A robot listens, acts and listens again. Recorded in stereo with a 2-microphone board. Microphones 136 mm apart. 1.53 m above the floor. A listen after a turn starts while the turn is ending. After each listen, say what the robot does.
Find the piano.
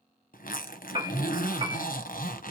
Turn 40° right.
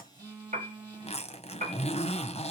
Turn 95° right.
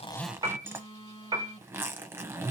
Turn 30° right.
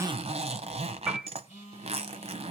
Facing the piano.